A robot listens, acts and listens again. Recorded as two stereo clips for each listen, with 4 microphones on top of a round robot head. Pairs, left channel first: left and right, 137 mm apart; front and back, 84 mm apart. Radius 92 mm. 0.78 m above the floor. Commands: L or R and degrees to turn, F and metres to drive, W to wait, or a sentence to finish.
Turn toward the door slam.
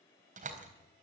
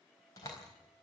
R60
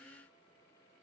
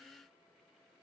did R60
I heard a door slam from this way, but can't make it out now.